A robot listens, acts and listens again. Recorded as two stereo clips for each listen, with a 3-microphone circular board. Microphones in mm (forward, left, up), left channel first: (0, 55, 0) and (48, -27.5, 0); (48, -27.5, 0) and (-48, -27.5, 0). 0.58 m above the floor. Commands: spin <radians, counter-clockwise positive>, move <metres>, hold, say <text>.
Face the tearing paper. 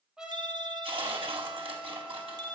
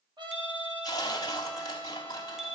spin -0.79
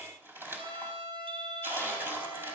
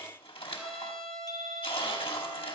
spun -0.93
say Facing the tearing paper, over 4 m away.